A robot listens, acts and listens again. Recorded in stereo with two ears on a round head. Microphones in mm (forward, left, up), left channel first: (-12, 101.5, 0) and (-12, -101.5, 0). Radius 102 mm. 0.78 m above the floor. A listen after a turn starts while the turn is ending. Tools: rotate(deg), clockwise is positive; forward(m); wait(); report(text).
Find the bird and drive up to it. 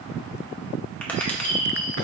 rotate(-50)
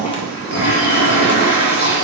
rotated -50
wait()
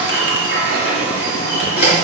wait()
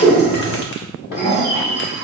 rotate(-80)
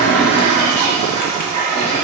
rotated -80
wait()
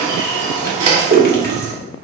wait()
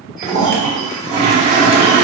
report("Facing where the bird came from. I can't hear it now. I did not reach it.")